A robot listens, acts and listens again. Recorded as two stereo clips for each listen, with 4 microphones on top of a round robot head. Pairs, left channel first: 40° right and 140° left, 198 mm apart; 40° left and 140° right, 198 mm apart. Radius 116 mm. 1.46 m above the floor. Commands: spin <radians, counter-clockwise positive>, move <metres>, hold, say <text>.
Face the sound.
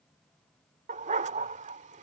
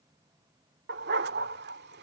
spin -2.97
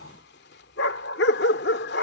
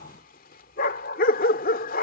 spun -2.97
say Found it: a dog barking, straight ahead.